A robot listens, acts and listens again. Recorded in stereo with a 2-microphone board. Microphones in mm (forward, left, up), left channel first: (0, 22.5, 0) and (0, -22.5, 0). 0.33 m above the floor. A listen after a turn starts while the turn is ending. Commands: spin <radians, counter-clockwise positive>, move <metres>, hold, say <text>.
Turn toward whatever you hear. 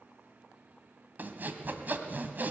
spin -0.79
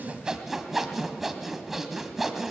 say Found it: sawing, straight ahead.